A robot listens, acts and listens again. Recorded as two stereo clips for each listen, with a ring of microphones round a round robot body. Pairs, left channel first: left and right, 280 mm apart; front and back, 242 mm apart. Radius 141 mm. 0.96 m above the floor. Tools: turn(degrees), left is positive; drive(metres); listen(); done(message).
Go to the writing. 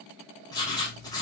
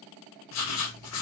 turn(degrees=15)
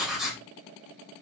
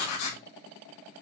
drive(metres=1.0)
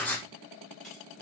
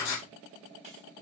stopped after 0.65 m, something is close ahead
done("Blocked. The writing is further on, straight ahead.")